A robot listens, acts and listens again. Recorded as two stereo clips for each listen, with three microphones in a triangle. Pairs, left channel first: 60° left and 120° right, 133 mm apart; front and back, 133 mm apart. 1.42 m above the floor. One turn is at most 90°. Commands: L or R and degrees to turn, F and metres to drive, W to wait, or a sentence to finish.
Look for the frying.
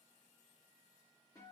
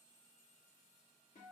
W
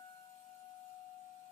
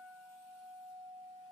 W
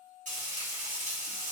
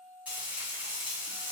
R90
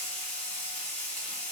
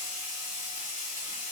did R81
R20
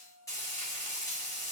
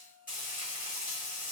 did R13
Facing the frying.